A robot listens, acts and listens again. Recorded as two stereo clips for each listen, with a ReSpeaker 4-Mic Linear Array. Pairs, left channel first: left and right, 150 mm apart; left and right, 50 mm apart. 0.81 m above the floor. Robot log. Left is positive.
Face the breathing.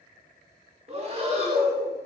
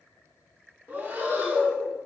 note: The breathing: about 40° right or 140° right.
cmd yaw -40
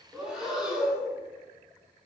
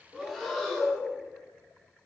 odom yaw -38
end: Facing the breathing.